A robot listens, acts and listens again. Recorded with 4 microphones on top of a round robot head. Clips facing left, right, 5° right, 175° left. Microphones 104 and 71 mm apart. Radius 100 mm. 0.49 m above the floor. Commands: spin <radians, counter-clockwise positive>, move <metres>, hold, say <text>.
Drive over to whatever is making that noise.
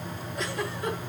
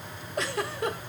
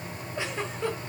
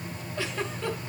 spin -1.40
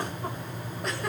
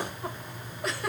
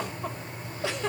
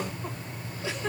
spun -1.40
move 1.0
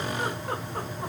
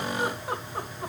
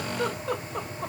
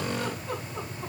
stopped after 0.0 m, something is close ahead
say Blocked. The giggle is further on, straight ahead.